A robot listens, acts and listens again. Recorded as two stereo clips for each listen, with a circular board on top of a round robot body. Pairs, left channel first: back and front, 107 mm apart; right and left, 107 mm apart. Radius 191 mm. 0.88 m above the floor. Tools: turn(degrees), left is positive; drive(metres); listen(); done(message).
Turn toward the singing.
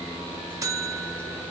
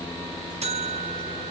listen()
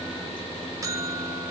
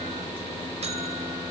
listen()
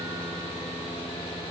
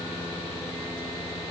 done("I can't make out singing to turn to.")